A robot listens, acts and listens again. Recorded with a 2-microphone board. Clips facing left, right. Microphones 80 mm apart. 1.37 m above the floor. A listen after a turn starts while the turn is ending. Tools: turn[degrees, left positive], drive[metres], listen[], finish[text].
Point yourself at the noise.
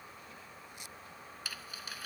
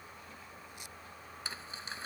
Thought: The crumpling: about 30° right or 150° right.
Action: turn[-30]
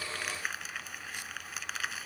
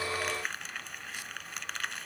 Action: finish[Facing the crumpling.]